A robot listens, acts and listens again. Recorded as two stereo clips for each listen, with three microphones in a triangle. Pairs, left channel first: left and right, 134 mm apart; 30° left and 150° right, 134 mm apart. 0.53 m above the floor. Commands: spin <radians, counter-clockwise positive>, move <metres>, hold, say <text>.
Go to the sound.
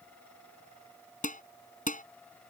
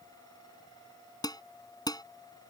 spin 1.57
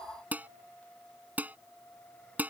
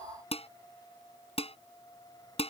spin -0.17
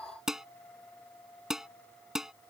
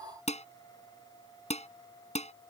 move 1.0
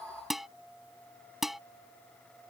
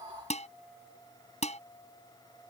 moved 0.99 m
move 1.0
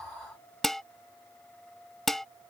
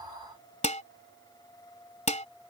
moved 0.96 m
move 1.0
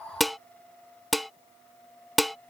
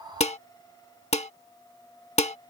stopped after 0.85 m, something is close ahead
say I am next to the dishes clattering.